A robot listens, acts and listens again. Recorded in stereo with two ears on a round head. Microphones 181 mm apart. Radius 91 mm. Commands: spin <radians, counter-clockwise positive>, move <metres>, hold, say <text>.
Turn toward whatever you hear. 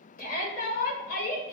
spin 0.79
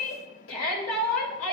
spin 1.57
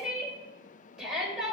say Found it: a shout, straight ahead.